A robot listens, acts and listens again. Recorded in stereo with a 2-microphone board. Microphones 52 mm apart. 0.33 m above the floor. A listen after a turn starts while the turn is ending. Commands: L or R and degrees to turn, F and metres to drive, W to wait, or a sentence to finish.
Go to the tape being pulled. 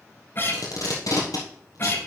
L90
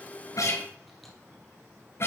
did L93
W
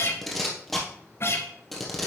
F1.0
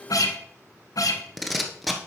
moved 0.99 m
F1.0
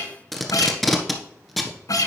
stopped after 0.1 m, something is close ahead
I am next to the tape being pulled.